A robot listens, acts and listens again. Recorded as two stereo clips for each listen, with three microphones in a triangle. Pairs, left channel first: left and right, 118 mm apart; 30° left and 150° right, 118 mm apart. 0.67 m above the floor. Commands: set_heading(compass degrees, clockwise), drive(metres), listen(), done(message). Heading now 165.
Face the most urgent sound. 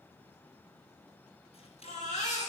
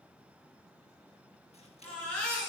set_heading(55)
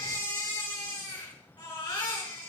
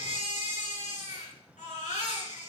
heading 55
set_heading(20)
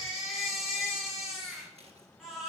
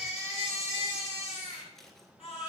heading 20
done("Facing the baby crying.")